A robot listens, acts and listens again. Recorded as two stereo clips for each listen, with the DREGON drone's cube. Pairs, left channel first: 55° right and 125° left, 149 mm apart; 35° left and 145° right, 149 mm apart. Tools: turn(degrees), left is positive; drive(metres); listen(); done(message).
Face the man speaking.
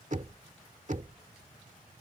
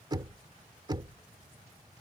listen()
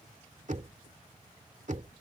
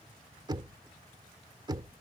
listen()
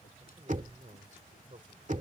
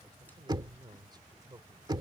turn(degrees=150)
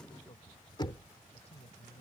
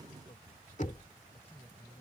turn(degrees=-10)
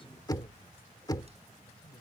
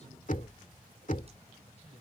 listen()
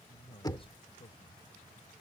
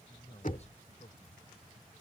done("Facing the man speaking.")